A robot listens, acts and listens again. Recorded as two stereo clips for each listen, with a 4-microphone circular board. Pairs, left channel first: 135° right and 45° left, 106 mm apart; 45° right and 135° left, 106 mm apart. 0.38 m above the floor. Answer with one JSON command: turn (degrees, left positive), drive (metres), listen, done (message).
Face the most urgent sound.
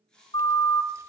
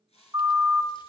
{"turn": -150}
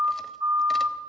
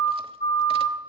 {"done": "Facing the siren."}